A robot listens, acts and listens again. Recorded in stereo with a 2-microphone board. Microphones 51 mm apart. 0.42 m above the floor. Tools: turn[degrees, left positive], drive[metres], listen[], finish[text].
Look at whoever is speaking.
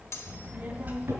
Thought: The child speaking: about 40° right or 140° right.
Action: turn[-40]
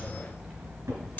Thought: So it is at 15° right.
Action: turn[-15]
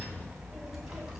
Thought: The child speaking is now 10° right.
Action: turn[-10]
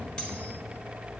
Action: finish[Facing the child speaking, 2 to 4 m away.]